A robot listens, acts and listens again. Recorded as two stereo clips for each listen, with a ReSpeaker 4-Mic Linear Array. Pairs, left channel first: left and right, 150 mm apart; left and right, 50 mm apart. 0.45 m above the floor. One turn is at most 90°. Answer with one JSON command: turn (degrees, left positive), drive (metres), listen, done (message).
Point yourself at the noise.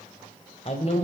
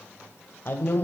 {"turn": 45}
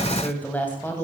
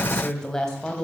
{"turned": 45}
{"turn": 15}
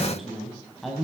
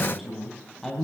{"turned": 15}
{"done": "Found it: a woman speaking, straight ahead, 2 to 4 m away."}